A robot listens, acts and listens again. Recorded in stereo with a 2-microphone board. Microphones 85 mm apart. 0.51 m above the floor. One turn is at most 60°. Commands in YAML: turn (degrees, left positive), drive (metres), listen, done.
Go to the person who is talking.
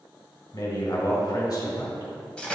turn: 50
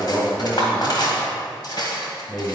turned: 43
turn: 10
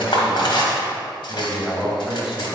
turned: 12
drive: 1.0
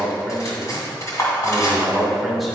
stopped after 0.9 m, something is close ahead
done: "I am next to the man speaking."